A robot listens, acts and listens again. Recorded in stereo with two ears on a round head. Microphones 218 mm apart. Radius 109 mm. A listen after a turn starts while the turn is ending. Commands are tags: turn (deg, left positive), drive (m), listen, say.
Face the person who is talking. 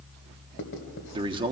<turn deg="-20"/>
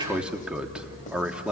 <say>Facing the man speaking.</say>